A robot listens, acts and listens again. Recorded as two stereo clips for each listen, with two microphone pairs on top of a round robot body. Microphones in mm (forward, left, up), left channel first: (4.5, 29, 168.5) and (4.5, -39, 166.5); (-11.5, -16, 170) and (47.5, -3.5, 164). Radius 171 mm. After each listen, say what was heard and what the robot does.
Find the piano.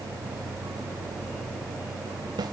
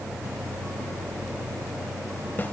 Keep listening.
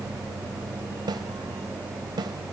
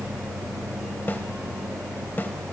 Keep listening.
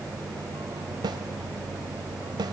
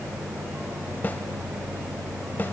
I can't make out a piano, only a snare drum.